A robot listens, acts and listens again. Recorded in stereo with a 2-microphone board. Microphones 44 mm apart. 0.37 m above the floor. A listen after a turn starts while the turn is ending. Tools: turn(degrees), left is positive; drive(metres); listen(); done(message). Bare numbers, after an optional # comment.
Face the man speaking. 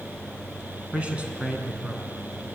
# The man speaking: about 20° right or 160° right.
turn(-20)
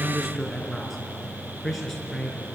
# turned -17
done("Facing the man speaking.")